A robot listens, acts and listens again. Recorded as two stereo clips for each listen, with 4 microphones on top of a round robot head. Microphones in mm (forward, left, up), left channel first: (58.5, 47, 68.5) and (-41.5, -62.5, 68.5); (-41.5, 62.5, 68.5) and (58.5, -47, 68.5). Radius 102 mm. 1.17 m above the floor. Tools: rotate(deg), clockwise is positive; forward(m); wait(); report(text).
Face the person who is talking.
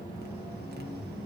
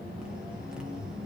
wait()
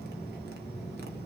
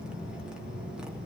wait()
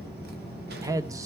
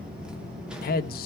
rotate(-155)
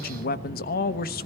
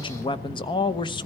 rotate(-75)
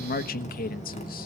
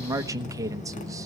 rotate(-20)
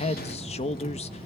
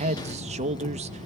report("Found it: a man speaking, straight ahead.")